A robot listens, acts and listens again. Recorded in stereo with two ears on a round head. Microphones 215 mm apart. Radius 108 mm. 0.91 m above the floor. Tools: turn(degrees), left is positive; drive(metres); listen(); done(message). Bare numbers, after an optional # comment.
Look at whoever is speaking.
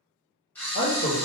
# The man speaking: about 55° left or 125° left.
turn(55)
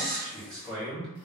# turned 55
done("Found it: a man speaking, straight ahead.")